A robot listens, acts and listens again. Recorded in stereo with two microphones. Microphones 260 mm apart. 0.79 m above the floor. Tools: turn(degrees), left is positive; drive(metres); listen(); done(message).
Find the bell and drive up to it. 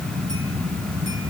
listen()
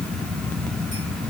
listen()
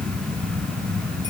done("I can't make out a bell.")